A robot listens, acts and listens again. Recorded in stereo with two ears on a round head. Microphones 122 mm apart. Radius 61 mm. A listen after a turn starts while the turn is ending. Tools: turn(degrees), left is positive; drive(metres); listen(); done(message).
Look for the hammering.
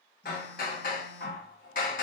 turn(degrees=65)
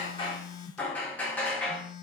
turn(degrees=10)
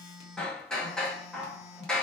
done("Facing the hammering, 1 to 2 m away.")